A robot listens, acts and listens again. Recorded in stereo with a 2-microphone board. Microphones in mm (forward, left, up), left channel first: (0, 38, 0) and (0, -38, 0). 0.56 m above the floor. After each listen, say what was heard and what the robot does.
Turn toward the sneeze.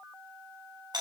Keep listening.
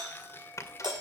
The sneeze: about 45° left or 135° left. Turn 45° left.
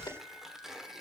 So it is at 90° left. Turn 90° left.
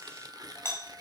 Facing where the sneeze came from. I can't hear it now.